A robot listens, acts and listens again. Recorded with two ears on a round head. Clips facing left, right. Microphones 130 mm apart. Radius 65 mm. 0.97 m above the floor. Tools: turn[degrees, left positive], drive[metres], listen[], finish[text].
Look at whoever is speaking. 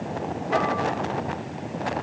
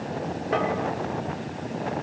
Action: listen[]
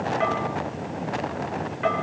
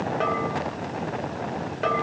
Action: listen[]
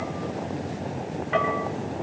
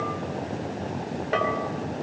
Action: finish[I can't make out anyone speaking to turn to.]